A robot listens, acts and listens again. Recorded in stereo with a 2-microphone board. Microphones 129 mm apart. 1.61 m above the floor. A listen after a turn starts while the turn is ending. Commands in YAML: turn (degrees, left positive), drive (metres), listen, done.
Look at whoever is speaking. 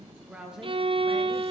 turn: -30
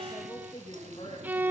turn: 45
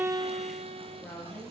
turn: 20
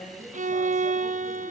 listen: true
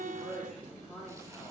done: "Found it: a woman speaking, straight ahead, over 4 m away."